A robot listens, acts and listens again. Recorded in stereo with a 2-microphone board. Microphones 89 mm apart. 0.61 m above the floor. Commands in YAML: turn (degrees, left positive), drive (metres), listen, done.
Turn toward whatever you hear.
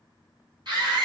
turn: -55
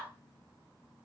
listen: true
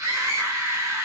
turn: -40
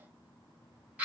turn: -20
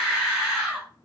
done: "Found it: a scream, straight ahead."